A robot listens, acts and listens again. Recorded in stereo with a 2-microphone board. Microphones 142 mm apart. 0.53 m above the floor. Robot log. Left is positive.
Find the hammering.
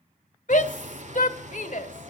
note: The hammering: about 55° right or 125° right.
cmd yaw -55
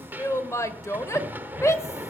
note: So it is at 15° right.
cmd yaw -15
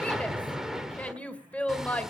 end: Facing the hammering, 1 to 2 m away.